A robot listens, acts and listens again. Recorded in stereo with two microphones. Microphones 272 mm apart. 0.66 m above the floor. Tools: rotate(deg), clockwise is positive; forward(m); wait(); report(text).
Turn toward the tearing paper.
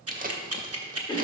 rotate(30)
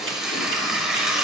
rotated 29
report("Found it: tearing paper, straight ahead.")